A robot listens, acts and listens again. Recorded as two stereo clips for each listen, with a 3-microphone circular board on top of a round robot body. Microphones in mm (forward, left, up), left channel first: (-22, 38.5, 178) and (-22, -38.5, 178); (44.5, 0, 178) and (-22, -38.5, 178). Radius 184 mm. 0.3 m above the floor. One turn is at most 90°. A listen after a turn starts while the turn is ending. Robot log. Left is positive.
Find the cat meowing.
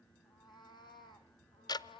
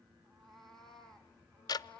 note: The cat meowing: 110° left.
cmd yaw +90
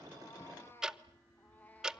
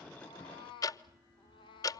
note: The cat meowing is now 15° left.
cmd yaw +15
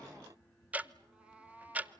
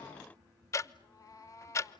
note: The cat meowing is now 20° right.
cmd yaw -20
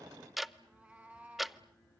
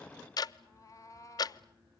note: The cat meowing is now 15° right.
cmd yaw -15
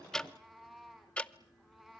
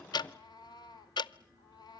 end: Found it: a cat meowing, straight ahead, 1 to 2 m away.